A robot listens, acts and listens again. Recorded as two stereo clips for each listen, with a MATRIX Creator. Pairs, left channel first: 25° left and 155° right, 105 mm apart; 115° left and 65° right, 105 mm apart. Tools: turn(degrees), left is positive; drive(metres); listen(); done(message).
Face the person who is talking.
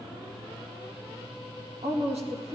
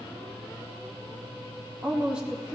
turn(degrees=-150)
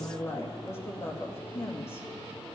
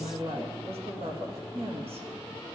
turn(degrees=-45)
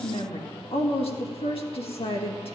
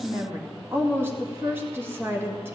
done("Found it: a woman speaking, straight ahead.")